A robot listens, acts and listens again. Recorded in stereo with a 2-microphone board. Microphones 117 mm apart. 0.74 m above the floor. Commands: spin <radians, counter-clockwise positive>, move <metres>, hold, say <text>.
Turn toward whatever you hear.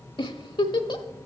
spin 0.79
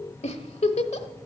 spin 1.57
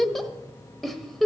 say Facing the giggle.